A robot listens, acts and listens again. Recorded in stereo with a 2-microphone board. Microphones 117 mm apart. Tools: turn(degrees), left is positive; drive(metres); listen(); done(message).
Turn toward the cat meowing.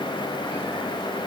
listen()
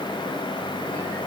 listen()
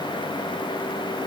done("I can't make out a cat meowing to turn to.")